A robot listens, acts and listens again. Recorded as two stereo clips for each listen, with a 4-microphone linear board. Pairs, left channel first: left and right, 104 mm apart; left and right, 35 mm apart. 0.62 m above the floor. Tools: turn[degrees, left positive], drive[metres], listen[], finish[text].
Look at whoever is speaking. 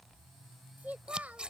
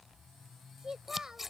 Action: turn[-30]
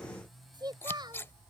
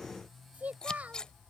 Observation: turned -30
Thought: So it is at 135° right.
Action: turn[-135]
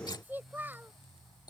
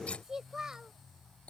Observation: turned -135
Thought: The child speaking is now 20° right.
Action: turn[-20]
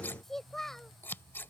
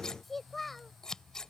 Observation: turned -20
Action: finish[Facing the child speaking.]